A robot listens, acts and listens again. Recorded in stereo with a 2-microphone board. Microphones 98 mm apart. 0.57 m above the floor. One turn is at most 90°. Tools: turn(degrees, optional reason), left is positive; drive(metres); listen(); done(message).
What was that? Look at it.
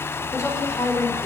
turn(degrees=35, reason="The woman speaking: about 35° left or 145° left.")
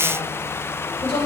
turn(degrees=90, reason="So it is at 110° left.")
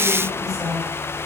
turn(degrees=35, reason="The woman speaking is now 35° left.")
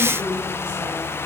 turn(degrees=-10, reason="The woman speaking is now 10° right.")
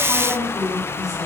done("Facing the woman speaking, over 4 m away.")